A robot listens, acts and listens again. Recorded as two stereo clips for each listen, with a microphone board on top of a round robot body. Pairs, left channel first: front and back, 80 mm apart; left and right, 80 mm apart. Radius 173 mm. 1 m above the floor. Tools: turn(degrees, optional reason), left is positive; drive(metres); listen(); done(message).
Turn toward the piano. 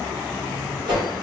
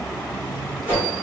listen()
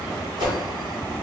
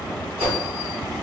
listen()
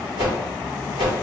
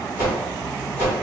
done("I can't make out a piano, only a whoosh.")